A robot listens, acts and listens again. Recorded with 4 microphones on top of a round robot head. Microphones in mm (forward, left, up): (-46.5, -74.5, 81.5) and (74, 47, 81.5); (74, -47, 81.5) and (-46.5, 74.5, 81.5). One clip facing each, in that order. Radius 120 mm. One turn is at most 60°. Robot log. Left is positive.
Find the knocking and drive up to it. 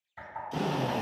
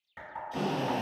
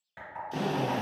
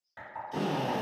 note: The knocking: 25° left.
cmd yaw +25
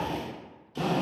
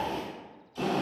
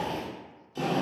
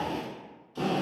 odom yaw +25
cmd idle
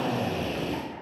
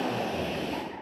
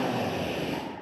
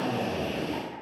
cmd idle
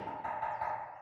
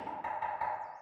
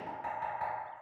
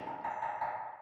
cmd fwd 1.0
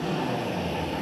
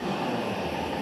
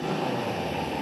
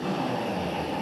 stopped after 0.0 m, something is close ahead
cmd idle
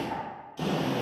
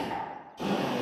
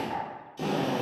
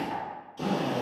cmd idle
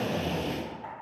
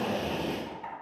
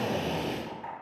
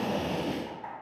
end: Blocked. The knocking is further on, straight ahead.